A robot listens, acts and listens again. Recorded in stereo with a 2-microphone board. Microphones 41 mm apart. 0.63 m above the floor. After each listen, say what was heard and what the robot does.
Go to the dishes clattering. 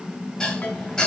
The dishes clattering: about 20° left or 160° left. Turn 20° left.
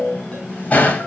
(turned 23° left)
So it is at 140° left. Turn 140° left.
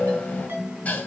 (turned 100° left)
Nothing new. It was at 40° left. Turn 40° left.
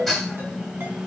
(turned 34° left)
Drive 1.0 m forward.
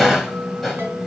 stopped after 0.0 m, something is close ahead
Blocked. The dishes clattering is further on, straight ahead.